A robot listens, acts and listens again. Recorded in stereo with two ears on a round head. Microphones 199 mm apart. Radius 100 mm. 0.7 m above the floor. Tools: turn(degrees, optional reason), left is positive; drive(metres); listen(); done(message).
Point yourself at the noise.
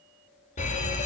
turn(degrees=30, reason="The fire alarm: about 30° left or 150° left.")
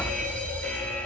done("Facing the fire alarm, over 4 m away.")